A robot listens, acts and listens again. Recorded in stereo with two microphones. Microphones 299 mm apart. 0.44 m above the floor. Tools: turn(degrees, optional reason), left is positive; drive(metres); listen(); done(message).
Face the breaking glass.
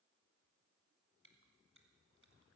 listen()
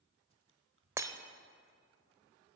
turn(degrees=-30)
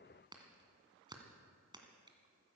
listen()
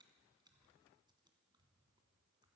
done("I heard breaking glass, but can't make it out now. It was about 20° left or 140° right.")